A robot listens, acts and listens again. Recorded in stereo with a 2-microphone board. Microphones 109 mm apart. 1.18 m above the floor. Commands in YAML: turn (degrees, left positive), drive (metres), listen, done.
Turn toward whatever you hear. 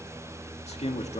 turn: 90
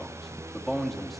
done: "Facing the man speaking, 2 to 4 m away."